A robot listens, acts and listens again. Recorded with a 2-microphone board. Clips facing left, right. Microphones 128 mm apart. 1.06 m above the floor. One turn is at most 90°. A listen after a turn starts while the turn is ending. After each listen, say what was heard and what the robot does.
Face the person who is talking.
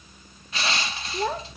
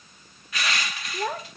Turn 30° left.
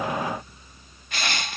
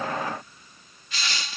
Keep listening.
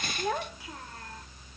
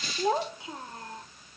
So it is at 25° right. Turn 25° right.
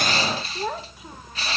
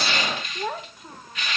Facing the child speaking.